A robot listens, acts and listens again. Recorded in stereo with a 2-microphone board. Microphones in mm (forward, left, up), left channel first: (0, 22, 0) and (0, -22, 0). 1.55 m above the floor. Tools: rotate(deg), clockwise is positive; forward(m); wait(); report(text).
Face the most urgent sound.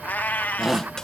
rotate(30)
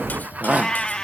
rotate(140)
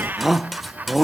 report("Found it: a shout, straight ahead.")